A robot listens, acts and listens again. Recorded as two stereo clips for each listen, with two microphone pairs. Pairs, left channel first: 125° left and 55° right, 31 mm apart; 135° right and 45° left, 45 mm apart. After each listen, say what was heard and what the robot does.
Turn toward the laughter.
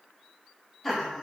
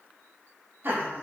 The laughter: 30° left. Turn 30° left.
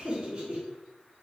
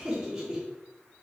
The laughter is now 30° right. Turn 30° right.
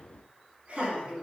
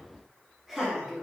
The laughter is now 45° right. Turn 45° right.
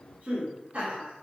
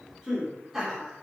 The laughter is now 35° right. Turn 35° right.
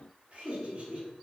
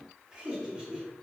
The laughter is now 20° right. Turn 20° right.
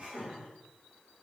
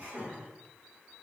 Facing the laughter.